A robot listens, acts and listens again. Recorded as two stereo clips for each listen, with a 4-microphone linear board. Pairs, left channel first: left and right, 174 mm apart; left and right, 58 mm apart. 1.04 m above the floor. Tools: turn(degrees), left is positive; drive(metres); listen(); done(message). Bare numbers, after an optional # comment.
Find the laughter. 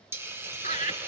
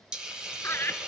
# The laughter: about 45° left or 135° left.
turn(45)
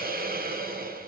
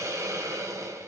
listen()
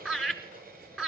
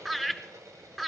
done("Found it: laughter, straight ahead, 2 to 4 m away.")